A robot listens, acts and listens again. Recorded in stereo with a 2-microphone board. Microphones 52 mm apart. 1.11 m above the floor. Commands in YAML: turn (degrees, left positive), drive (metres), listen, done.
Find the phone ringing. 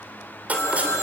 turn: 70
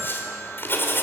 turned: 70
listen: true
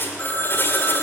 turn: 40
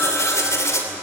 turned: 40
listen: true
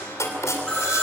turn: 15
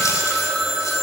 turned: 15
done: "Facing the phone ringing."